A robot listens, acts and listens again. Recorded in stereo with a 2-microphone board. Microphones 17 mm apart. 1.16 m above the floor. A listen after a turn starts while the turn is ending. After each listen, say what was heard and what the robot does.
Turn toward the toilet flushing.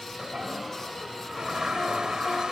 The toilet flushing: about 55° right or 125° right. Turn 55° right.
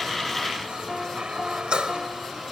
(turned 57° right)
So it is at 70° right. Turn 70° right.
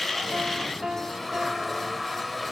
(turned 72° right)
Facing the toilet flushing.